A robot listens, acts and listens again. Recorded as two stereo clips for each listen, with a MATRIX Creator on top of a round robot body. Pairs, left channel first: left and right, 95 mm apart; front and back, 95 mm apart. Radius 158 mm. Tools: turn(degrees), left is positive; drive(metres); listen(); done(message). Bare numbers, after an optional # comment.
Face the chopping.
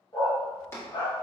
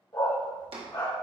# The chopping: 155° left.
turn(155)
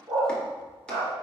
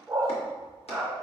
listen()
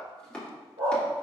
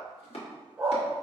# The chopping is now 10° left.
turn(10)
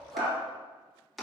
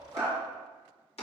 done("Facing the chopping.")